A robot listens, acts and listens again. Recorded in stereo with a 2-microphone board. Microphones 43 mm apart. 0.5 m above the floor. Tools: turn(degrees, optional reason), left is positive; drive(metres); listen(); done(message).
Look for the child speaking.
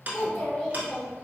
turn(degrees=25, reason="The child speaking: about 25° left or 155° left.")
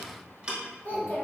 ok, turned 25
turn(degrees=130, reason="So it is at 130° left.")
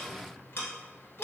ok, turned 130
listen()
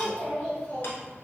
turn(degrees=30, reason="The child speaking is now 30° left.")
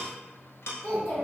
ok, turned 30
turn(degrees=20, reason="The child speaking is now 20° left.")
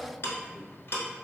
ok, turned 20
done("Facing the child speaking.")